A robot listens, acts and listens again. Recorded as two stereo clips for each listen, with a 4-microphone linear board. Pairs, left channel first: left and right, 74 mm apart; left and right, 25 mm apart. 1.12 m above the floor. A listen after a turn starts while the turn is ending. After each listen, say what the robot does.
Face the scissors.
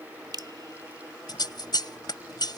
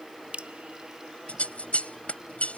Turn 75° left.
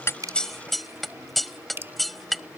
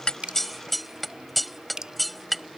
Facing the scissors.